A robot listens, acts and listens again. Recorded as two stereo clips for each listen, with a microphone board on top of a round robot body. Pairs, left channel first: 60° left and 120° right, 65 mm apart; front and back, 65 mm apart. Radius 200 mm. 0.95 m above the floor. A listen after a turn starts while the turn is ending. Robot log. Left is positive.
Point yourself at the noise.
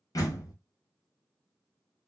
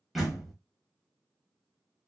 note: The door slam: 90° left.
cmd yaw +90
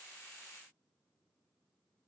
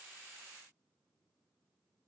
end: Facing where the door slam came from. I can't hear it now.